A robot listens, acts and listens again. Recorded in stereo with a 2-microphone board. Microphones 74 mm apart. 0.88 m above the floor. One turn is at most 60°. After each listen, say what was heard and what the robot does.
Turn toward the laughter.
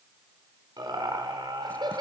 Turn 60° right.
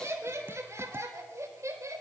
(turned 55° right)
So it is at 45° right. Turn 45° right.
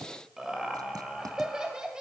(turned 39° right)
The laughter is now 10° right. Turn 10° right.
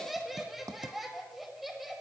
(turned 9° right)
Found it: laughter, straight ahead.